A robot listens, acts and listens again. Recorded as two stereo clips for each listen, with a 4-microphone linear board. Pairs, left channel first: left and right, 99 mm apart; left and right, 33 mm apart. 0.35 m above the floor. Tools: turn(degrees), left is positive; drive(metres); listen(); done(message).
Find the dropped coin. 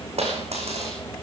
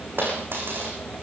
turn(degrees=-90)
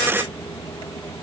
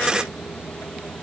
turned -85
done("Facing where the dropped coin came from. I can't hear it now.")